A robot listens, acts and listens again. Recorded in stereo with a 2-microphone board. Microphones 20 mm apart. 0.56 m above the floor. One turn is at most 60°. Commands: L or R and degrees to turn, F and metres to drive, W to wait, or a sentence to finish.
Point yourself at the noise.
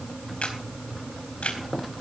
L60
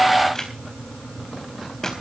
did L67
L30
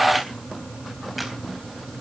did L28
W
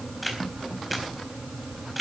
Facing the camera shutter.